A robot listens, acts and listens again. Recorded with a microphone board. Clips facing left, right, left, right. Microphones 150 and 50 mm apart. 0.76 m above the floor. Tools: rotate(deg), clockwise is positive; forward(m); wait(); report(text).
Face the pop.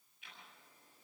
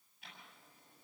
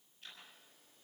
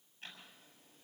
wait()
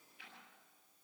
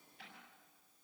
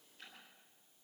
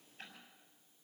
wait()
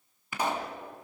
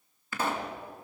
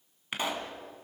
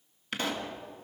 rotate(-15)
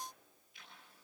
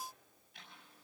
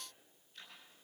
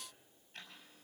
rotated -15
wait()
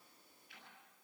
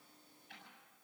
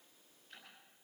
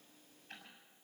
report("I heard a pop, but can't make it out now. It was about straight ahead or 150° left.")